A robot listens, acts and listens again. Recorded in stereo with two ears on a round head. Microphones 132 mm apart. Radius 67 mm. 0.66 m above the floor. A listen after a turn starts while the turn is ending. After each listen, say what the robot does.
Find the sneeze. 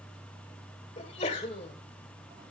Turn 50° left.
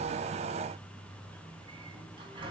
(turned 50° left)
Keep listening.
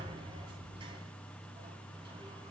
I heard a sneeze, but can't make it out now. It was about straight ahead or 80° left.